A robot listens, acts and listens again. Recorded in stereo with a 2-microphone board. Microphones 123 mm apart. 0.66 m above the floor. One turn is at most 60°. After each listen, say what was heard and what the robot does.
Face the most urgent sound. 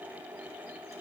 Keep listening.
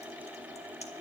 Keep listening.
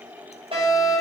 The fire alarm: about 50° right or 130° right. Turn 50° right.
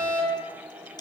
So it is at 75° right. Turn 60° right.
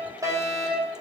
The fire alarm is now 30° right. Turn 30° right.
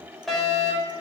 Facing the fire alarm, over 4 m away.